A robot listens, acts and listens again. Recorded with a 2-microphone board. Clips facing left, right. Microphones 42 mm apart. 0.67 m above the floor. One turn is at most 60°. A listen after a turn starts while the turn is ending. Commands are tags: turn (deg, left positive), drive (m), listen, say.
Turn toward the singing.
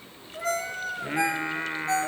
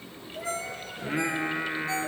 <turn deg="30"/>
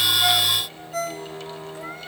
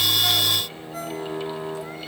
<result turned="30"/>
<turn deg="-15"/>
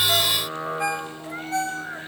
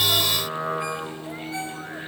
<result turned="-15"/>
<say>Found it: singing, straight ahead.</say>